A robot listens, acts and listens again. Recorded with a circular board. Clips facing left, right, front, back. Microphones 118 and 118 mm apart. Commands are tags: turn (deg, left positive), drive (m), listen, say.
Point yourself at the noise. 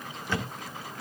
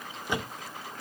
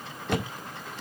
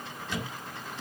<turn deg="-20"/>
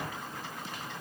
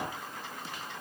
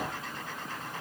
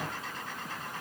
<say>Facing where the thud came from. I can't hear it now.</say>